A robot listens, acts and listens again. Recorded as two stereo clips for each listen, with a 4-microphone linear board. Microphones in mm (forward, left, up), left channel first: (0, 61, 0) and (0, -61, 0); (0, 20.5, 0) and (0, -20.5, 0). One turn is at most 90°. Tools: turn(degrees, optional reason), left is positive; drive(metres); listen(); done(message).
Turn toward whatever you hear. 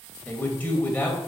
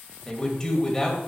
turn(degrees=30)
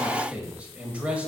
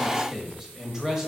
turn(degrees=-15, reason="So it is at 15° right.")
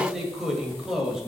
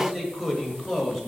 done("Found it: a man speaking, straight ahead.")